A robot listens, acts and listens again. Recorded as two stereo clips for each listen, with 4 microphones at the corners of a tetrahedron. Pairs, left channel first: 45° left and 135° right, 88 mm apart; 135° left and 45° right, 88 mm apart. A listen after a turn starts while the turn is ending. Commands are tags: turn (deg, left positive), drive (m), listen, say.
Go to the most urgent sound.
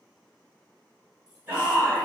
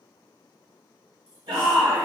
<turn deg="-70"/>
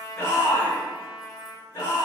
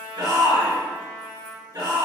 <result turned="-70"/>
<drive m="1.0"/>
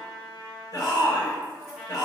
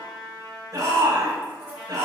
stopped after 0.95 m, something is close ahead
<say>I am next to the shout.</say>